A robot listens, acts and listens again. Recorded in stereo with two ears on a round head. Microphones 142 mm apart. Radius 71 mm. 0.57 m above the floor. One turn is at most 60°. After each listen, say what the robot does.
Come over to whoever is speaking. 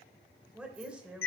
Turn 30° right.
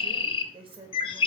Turn 60° right.
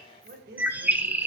Turn 60° right.
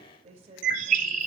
Turn 45° right.
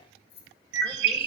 Keep listening.
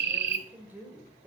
Turn 15° right.
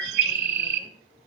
Keep listening.
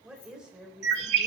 Drive 1.0 m forward.
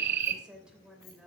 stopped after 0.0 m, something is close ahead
Blocked. The woman speaking is further on, straight ahead.